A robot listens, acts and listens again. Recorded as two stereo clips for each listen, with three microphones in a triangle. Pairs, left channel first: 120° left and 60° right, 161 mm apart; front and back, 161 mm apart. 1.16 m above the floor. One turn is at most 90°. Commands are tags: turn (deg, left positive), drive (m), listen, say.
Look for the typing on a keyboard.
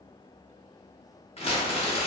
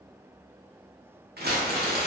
<listen/>
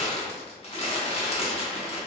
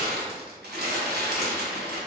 <listen/>
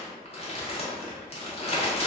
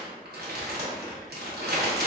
<say>I can't make out typing on a keyboard, only crumpling.</say>